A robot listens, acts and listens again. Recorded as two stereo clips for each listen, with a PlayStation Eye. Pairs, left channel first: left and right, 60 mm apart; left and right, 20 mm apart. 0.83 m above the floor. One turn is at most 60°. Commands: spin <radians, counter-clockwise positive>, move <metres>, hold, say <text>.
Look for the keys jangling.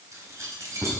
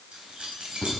spin -1.05
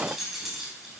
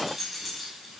say Facing the keys jangling.